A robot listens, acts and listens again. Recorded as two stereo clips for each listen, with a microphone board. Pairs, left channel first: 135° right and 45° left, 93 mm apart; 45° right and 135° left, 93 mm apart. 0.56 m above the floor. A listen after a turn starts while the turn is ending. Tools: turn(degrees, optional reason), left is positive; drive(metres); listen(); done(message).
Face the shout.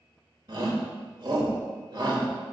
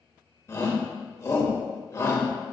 turn(degrees=10, reason="The shout: 10° left.")
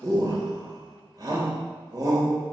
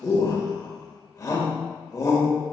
done("Facing the shout, 1 to 2 m away.")